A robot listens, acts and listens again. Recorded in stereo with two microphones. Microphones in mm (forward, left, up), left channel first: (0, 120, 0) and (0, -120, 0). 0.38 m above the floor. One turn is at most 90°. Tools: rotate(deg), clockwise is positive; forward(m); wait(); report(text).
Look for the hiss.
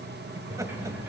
wait()
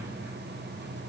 wait()
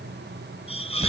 rotate(-25)
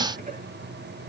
wait()
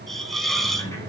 report("Found it: a hiss, straight ahead.")